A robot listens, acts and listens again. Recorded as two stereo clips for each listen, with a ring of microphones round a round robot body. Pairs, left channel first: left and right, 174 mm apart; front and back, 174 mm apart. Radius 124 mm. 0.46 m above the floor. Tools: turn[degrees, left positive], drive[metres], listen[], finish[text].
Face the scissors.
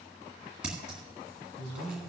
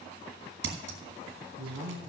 Thought: The scissors: 175° right.
Action: turn[-175]
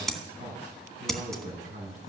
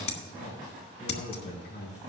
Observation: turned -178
Action: finish[Found it: scissors, straight ahead.]